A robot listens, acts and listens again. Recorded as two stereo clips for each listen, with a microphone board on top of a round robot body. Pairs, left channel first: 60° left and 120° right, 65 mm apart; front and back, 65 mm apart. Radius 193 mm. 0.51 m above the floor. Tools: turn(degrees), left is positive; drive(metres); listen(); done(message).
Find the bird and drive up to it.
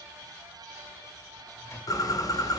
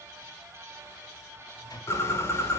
turn(degrees=45)
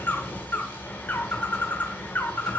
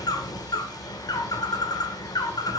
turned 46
drive(metres=1.0)
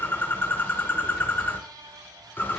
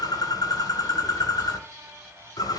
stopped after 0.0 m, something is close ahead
done("Blocked. The bird is further on, straight ahead.")